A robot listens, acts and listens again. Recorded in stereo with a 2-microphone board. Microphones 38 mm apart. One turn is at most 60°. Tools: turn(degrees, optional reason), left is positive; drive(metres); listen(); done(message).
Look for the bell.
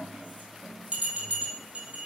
turn(degrees=-25, reason="The bell: about 25° right or 155° right.")
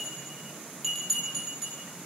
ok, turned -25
done("Found it: a bell, straight ahead, 2 to 4 m away.")